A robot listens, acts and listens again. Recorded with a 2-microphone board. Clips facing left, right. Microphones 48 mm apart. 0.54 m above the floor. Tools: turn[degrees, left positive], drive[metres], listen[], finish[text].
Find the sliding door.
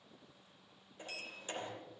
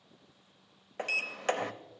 Action: turn[-90]
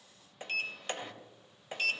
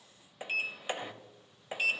Thought: So it is at 10° right.
Action: turn[-10]
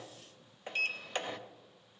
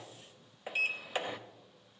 Action: finish[Found it: a sliding door, straight ahead, under 1 m away.]